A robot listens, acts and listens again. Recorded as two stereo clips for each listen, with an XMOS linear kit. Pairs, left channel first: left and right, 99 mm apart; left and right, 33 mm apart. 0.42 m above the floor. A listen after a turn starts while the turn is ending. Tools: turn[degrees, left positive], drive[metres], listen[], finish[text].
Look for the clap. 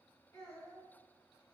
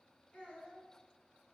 Action: listen[]
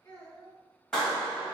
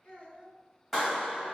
Action: turn[30]
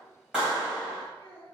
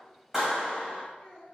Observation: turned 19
Thought: So it is at 10° right.
Action: turn[-10]
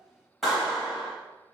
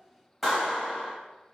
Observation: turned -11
Action: finish[Found it: a clap, straight ahead, 1 to 2 m away.]